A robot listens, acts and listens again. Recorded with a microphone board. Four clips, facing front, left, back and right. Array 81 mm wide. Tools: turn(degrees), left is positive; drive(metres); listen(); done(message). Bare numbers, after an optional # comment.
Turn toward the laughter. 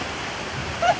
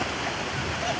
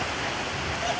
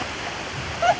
# The laughter: 55° right.
turn(-55)
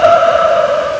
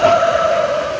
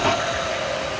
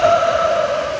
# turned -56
done("Found it: laughter, straight ahead.")